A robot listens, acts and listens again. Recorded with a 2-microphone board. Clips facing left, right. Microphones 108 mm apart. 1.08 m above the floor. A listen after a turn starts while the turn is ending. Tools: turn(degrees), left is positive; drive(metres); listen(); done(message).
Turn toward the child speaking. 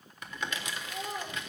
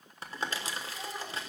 turn(degrees=70)
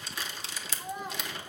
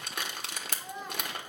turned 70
turn(degrees=15)
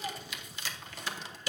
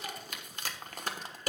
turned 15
listen()
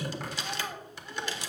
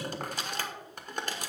turn(degrees=10)
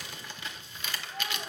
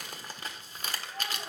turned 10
done("Facing the child speaking, 2 to 4 m away.")